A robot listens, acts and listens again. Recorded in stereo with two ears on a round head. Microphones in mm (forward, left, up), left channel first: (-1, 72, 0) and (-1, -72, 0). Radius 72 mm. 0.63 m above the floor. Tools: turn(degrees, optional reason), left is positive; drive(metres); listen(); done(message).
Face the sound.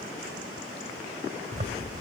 turn(degrees=-45, reason="The zipper: about 45° right or 135° right.")
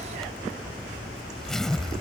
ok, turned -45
done("Facing the zipper.")